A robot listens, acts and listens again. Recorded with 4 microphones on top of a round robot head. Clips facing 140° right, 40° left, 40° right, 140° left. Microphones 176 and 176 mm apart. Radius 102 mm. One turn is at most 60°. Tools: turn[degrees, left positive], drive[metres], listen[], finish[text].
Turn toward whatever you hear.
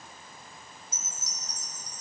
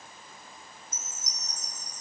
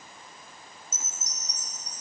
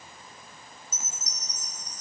Thought: The chime: 35° right.
Action: turn[-35]
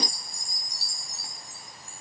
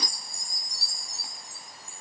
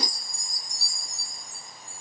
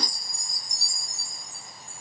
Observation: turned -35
Action: finish[Facing the chime, 2 to 4 m away.]